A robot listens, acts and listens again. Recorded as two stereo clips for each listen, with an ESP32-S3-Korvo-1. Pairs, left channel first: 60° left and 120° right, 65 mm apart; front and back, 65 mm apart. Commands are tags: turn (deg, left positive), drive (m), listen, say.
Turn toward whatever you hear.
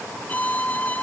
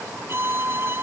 <turn deg="125"/>
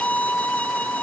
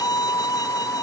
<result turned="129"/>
<say>Facing the violin.</say>